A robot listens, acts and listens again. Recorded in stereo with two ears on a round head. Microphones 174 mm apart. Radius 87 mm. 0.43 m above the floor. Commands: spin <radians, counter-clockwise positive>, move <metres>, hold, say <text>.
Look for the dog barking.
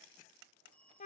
hold
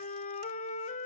hold
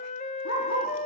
spin 1.31
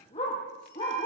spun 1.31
spin 0.52
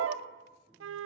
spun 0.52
hold
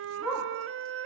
say Found it: a dog barking, straight ahead, over 4 m away.